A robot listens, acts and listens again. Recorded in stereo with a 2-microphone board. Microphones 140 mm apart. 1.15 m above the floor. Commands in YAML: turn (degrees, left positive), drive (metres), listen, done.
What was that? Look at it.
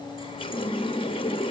turn: 40
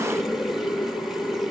done: "Facing the running tap."